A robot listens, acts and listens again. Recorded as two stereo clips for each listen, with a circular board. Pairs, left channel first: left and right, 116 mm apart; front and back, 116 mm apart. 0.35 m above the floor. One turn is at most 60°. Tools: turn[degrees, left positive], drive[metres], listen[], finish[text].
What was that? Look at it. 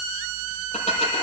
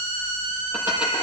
Thought: The dishes clattering: 105° left.
Action: turn[60]
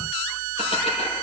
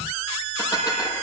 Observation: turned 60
Thought: The dishes clattering is now 60° left.
Action: turn[60]
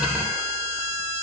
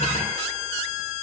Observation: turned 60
Action: listen[]
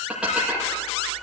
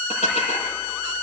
Thought: The dishes clattering is now 10° right.
Action: turn[-10]
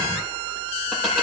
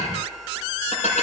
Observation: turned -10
Action: finish[Found it: dishes clattering, straight ahead.]